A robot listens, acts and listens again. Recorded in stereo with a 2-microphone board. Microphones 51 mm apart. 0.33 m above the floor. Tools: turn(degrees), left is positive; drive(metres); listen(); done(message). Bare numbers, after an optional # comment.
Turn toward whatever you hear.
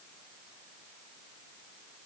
listen()
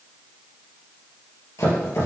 # The chopping: about 75° left or 105° left.
turn(75)
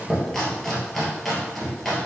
done("Found it: chopping, straight ahead.")